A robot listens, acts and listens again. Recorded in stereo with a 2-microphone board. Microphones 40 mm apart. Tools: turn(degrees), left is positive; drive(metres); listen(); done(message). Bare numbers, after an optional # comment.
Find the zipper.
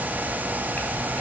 listen()
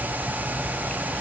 listen()
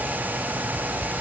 done("I can't make out a zipper.")